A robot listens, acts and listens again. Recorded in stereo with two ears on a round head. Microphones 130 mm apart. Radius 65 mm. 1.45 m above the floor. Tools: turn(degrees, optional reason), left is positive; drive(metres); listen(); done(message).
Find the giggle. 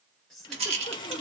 turn(degrees=30)
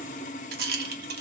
listen()
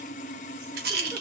listen()
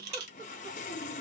done("I heard a giggle, but can't make it out now. It was about 25° right or 145° left.")